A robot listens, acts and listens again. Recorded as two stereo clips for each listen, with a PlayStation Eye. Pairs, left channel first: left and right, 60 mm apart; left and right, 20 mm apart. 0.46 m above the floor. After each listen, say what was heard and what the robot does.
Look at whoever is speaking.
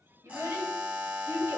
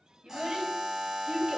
The child speaking: about 55° right or 125° right. Turn 55° right.
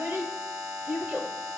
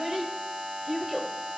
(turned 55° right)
So it is at 30° right. Turn 30° right.
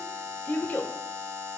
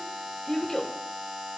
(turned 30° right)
The child speaking is now 30° left. Turn 30° left.
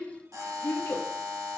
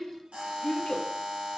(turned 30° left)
The child speaking is now 45° left. Turn 45° left.
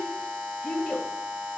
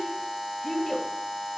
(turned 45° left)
Found it: a child speaking, straight ahead.